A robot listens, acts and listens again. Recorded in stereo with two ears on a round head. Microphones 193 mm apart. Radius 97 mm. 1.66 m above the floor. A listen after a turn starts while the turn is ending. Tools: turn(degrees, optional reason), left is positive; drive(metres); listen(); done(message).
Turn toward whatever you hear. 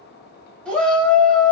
turn(degrees=30)
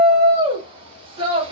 turn(degrees=-25, reason="So it is at 25° right.")
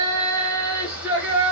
turn(degrees=-10, reason="The shout is now 10° right.")
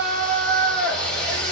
done("Facing the shout.")